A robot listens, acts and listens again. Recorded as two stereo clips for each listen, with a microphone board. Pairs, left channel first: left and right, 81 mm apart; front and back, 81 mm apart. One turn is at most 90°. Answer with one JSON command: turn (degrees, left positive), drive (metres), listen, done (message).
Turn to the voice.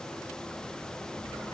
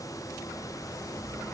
{"listen": true}
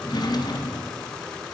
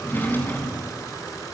{"listen": true}
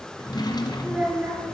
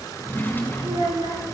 {"turn": -90}
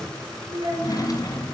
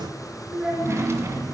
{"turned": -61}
{"turn": -90}
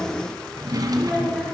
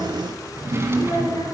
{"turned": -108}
{"turn": 10}
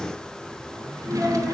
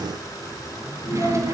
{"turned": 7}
{"listen": true}
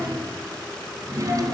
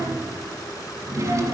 {"listen": true}
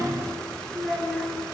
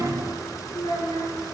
{"done": "Facing the child speaking, over 4 m away."}